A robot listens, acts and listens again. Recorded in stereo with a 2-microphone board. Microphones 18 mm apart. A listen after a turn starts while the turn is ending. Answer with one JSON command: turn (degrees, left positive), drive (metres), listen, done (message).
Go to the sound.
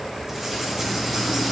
{"turn": -30}
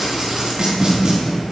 {"turn": -135}
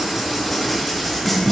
{"drive": 1.0}
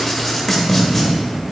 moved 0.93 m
{"turn": 15}
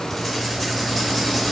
{"drive": 1.0}
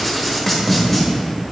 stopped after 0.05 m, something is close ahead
{"done": "Arrived at the writing, straight ahead."}